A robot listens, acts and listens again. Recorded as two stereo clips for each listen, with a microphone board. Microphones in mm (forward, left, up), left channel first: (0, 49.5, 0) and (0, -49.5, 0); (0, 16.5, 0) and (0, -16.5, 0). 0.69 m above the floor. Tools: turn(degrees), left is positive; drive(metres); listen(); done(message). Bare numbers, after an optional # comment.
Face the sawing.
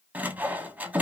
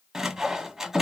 # The sawing: about 15° right or 165° right.
turn(-15)
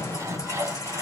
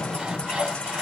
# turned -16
# So it is at 150° right.
turn(-150)
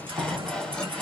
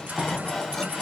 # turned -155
# The sawing is now 10° left.
turn(10)
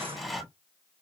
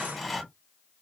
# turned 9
done("Facing the sawing.")